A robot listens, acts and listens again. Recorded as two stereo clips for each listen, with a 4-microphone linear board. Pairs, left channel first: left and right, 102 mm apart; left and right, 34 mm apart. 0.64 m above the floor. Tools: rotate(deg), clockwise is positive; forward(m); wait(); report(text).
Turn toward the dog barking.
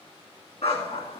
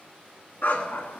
rotate(-90)
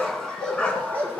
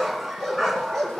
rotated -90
rotate(-15)
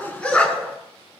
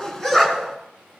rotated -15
rotate(-15)
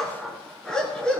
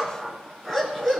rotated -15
rotate(-10)
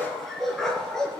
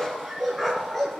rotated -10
report("Facing the dog barking, 2 to 4 m away.")